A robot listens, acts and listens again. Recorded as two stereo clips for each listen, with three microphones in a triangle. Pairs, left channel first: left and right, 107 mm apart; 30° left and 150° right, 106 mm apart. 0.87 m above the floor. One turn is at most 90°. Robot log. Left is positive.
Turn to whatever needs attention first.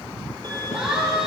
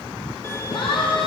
end: Found it: a siren, straight ahead.